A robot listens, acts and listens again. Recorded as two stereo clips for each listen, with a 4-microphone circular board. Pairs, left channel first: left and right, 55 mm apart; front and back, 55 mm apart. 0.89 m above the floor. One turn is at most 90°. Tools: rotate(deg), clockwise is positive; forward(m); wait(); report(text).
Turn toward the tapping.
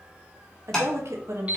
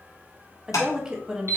rotate(-15)
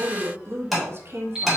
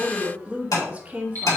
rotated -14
report("Found it: tapping, straight ahead, 1 to 2 m away.")